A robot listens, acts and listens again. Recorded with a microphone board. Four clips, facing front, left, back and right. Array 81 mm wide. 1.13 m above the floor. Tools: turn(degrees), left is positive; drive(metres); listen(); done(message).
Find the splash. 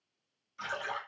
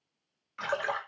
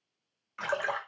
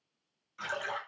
turn(degrees=150)
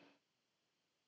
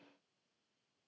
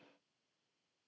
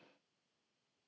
done("Facing where the splash came from. I can't hear it now.")